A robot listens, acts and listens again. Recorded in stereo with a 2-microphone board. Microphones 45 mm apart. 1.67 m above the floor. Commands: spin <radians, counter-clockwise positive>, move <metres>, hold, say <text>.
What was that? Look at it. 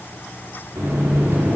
spin -1.57
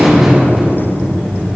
spin -0.17
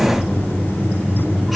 say Found it: a buzzer, straight ahead, over 4 m away.